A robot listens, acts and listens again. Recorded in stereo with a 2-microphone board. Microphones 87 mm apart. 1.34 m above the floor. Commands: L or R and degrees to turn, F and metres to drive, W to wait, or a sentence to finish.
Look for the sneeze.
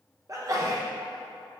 R40
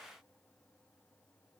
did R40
W
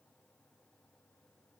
I heard a sneeze, but can't make it out now. It was about straight ahead or 100° right.